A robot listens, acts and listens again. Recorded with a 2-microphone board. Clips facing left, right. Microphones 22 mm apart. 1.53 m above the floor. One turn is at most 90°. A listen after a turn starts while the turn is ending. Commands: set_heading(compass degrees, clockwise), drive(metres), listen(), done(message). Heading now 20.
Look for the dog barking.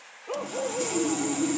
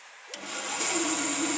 set_heading(310)
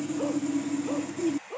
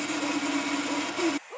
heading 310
done("Facing the dog barking.")